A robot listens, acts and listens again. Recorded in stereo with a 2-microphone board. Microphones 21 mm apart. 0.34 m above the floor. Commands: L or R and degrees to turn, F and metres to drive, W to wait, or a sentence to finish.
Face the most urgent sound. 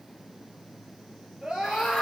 R45
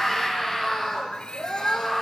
Found it: a scream, straight ahead, over 4 m away.